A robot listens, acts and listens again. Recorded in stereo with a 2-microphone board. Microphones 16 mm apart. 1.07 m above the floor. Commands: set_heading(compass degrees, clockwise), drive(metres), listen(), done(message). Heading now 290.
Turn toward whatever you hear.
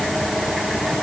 listen()
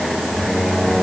set_heading(355)
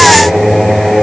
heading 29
set_heading(354)
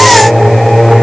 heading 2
set_heading(352)
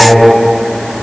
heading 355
done("Facing the singing.")